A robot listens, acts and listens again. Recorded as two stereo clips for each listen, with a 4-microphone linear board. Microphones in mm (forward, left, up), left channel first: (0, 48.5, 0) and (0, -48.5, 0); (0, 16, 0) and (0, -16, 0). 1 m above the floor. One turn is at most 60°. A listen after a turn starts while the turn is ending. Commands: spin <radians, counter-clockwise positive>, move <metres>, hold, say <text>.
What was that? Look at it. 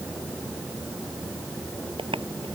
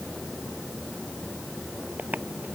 spin -1.05
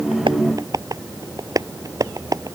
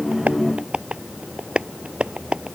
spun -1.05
spin -0.70
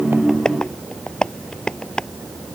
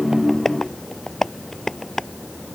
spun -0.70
spin 0.17
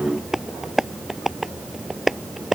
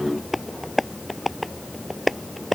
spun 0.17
say Facing the tapping.